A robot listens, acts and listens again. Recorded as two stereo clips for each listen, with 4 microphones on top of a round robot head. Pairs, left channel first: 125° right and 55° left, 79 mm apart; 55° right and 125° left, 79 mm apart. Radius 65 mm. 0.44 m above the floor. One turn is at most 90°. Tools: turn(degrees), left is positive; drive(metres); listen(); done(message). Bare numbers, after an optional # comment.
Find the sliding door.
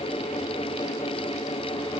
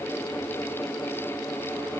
listen()
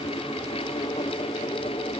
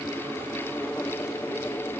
listen()
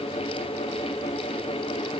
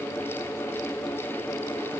done("I can't make out a sliding door.")